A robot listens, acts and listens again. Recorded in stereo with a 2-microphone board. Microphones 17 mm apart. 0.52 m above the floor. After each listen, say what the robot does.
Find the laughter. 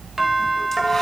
Keep listening.
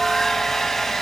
Keep listening.
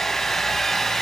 I can't make out laughter, only a doorbell and a hair dryer.